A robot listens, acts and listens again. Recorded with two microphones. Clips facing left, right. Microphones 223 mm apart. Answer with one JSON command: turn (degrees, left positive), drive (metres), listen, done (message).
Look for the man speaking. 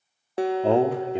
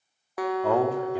{"turn": 25}
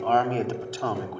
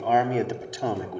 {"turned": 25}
{"turn": -20}
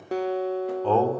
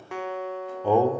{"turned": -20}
{"turn": -15}
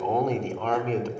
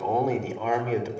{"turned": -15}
{"turn": -10}
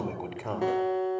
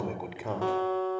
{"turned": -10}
{"done": "Facing the man speaking."}